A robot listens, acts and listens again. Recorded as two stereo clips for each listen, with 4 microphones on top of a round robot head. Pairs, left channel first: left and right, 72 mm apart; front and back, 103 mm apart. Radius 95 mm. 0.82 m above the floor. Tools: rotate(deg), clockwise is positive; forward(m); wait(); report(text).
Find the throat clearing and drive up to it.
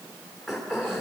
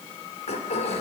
forward(1.0)
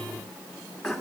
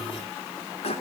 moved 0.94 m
forward(1.0)
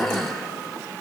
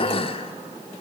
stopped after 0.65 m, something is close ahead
report("Arrived at the throat clearing, straight ahead.")